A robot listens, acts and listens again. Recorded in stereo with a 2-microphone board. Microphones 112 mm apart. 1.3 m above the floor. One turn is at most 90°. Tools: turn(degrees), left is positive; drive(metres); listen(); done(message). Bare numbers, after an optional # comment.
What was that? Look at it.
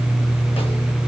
listen()
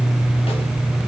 listen()
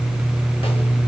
done("I can't make out anything to turn to.")